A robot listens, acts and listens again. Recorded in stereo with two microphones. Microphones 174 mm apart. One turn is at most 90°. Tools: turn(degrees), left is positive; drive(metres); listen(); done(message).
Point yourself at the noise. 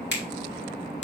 turn(degrees=90)
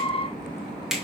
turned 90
done("Found it: a finger snap, straight ahead.")